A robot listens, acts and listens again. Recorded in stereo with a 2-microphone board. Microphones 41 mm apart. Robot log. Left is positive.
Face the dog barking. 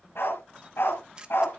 note: The dog barking: about 75° left or 105° left.
cmd yaw +75
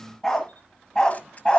note: So it is at 25° left.
cmd yaw +25
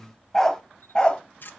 note: The dog barking is now 25° left.
cmd yaw +25
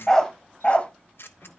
note: The dog barking is now 35° left.
cmd yaw +35
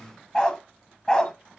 note: The dog barking is now 20° left.
cmd yaw +20
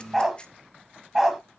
end: Found it: a dog barking, straight ahead.